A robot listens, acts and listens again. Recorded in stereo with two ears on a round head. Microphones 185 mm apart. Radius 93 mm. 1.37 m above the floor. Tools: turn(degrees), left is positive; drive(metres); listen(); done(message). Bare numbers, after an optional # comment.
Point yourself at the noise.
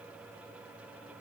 listen()
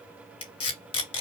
# The tape being pulled: about 25° left or 155° left.
turn(25)
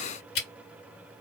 # So it is at 125° left.
turn(125)
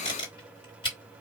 # The tape being pulled is now 25° left.
turn(25)
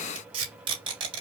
# The tape being pulled is now 25° right.
turn(-25)
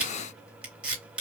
done("Found it: tape being pulled, straight ahead.")